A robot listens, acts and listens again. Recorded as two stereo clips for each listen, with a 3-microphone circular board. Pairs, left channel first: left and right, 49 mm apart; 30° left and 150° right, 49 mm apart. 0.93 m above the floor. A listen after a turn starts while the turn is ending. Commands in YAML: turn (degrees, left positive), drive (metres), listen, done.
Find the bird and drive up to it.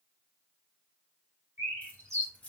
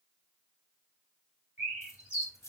turn: -90
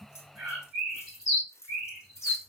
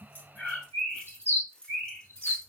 turn: -15
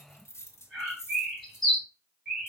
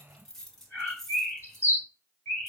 drive: 1.0
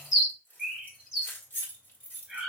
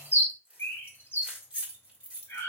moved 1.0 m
turn: -10
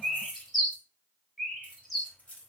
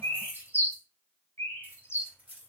drive: 1.0
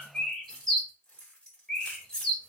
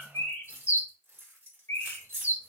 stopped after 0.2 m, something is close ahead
done: "I am next to the bird."